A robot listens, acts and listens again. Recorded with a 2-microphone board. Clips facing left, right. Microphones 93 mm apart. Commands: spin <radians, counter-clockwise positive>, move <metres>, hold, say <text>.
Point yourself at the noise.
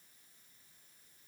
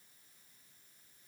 hold
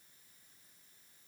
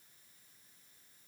hold
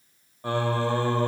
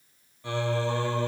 spin 0.70
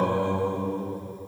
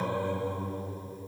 spin 1.57
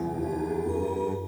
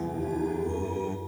say Facing the singing, 1 to 2 m away.